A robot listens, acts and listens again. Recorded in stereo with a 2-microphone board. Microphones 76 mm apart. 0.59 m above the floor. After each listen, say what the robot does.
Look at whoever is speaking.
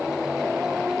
Keep listening.
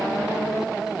Keep listening.
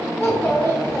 Turn 35° left.
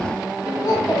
Turn 105° left.
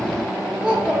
Turn 15° right.
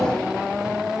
Keep listening.
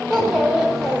Turn 10° right.
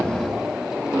Keep listening.
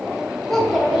Facing the child speaking.